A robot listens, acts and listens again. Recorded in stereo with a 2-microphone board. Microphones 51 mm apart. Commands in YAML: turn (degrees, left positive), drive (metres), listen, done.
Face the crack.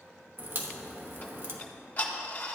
turn: -50
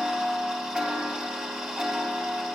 listen: true
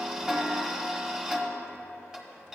done: "I heard a crack, but can't make it out now. It was about straight ahead or 80° right."